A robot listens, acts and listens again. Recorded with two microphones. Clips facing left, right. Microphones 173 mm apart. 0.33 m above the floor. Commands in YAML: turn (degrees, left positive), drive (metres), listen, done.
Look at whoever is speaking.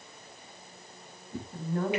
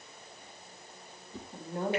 turn: -20
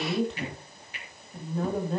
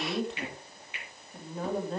done: "Found it: a woman speaking, straight ahead, 2 to 4 m away."